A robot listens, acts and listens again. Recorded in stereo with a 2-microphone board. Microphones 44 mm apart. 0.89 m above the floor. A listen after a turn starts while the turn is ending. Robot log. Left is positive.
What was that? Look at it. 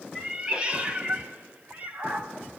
note: The cat meowing: about 35° right or 145° right.
cmd yaw -35
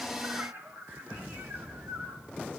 note: So it is at 105° right.
cmd yaw -105
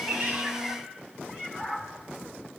note: The cat meowing is now 15° right.
cmd yaw -15
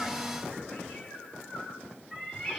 end: Found it: a cat meowing, straight ahead, over 4 m away.